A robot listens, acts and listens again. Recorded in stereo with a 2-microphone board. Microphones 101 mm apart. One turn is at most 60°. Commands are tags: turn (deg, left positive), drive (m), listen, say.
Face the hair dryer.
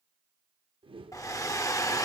<turn deg="30"/>
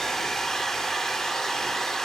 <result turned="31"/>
<say>Found it: a hair dryer, straight ahead.</say>